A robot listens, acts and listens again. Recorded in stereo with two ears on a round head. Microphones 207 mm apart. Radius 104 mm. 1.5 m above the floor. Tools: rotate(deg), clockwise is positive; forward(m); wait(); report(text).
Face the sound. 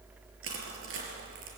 rotate(60)
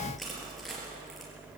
wait()
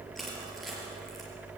report("Found it: crushing, straight ahead, over 4 m away.")